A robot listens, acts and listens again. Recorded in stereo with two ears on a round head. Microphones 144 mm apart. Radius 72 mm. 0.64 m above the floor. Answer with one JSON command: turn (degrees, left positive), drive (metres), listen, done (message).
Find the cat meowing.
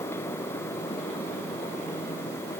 {"listen": true}
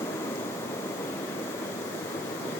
{"listen": true}
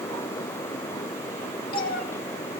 {"turn": 60}
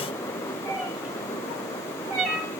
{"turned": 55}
{"done": "Facing the cat meowing, 1 to 2 m away."}